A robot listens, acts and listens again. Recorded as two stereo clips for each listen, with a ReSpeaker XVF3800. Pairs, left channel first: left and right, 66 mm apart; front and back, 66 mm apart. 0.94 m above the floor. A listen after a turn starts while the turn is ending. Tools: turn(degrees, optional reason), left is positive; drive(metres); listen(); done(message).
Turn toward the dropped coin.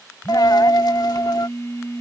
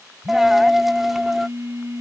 turn(degrees=90, reason="The dropped coin: 90° left.")
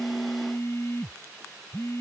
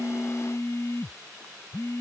done("I heard a dropped coin from this way, but can't make it out now.")